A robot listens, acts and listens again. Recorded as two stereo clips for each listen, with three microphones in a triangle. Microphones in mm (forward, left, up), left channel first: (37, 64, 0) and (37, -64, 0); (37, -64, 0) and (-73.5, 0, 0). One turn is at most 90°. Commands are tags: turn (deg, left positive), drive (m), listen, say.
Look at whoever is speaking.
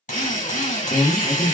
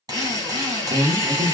<turn deg="90"/>
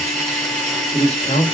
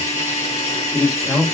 <turn deg="65"/>
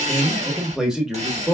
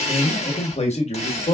<say>Facing the man speaking.</say>